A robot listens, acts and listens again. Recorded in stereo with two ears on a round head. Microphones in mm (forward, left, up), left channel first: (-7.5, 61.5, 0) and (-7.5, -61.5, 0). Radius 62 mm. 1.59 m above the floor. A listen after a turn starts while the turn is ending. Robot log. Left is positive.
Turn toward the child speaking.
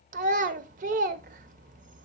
note: The child speaking: about 60° right or 120° right.
cmd yaw -60
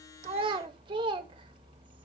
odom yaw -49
note: So it is at 40° right.
cmd yaw -40
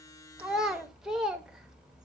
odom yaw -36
end: Facing the child speaking, under 1 m away.